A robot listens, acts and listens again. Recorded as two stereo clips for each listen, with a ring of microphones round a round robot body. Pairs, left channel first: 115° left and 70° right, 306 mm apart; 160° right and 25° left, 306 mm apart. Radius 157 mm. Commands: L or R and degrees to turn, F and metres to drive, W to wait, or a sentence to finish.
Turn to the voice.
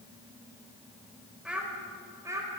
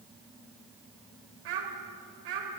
L10
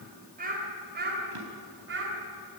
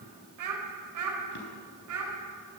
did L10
R15
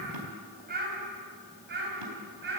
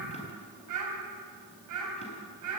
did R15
R10
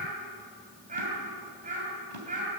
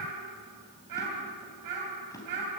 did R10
Found it: a child speaking, straight ahead.